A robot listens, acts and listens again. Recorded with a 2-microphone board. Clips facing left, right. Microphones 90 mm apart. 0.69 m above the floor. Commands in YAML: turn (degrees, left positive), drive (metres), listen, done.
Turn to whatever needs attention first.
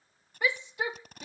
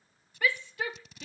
turn: 20
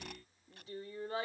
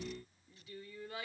turn: 140
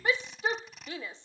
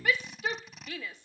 turn: 30
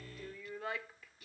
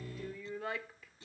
done: "Found it: a shout, straight ahead."